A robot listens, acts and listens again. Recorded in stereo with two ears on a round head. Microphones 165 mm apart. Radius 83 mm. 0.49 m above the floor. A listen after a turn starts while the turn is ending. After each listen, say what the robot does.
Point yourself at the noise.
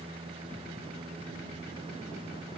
Keep listening.
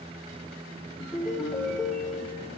Turn 30° left.
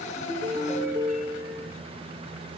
Turn 30° right.
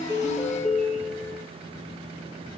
Found it: a ringtone, straight ahead.